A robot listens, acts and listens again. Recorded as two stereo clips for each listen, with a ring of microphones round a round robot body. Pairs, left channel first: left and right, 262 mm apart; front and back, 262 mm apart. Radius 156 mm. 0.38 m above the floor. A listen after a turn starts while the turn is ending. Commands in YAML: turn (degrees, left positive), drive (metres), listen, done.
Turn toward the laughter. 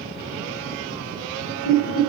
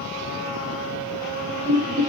turn: 105
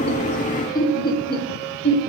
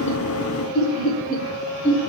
turn: 60
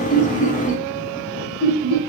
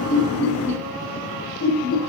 turn: 50
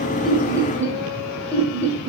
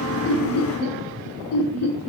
done: "Found it: laughter, straight ahead."